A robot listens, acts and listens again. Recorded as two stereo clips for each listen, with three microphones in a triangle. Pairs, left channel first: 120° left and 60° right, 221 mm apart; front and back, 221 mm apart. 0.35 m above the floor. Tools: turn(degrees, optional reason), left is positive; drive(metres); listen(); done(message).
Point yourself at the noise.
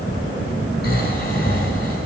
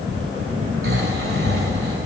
turn(degrees=160, reason="The snoring: 160° left.")
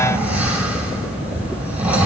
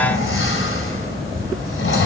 turn(degrees=25, reason="The snoring is now 25° left.")
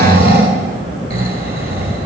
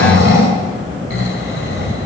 turn(degrees=-15, reason="The snoring is now 15° right.")
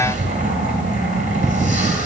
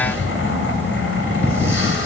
done("Found it: snoring, straight ahead.")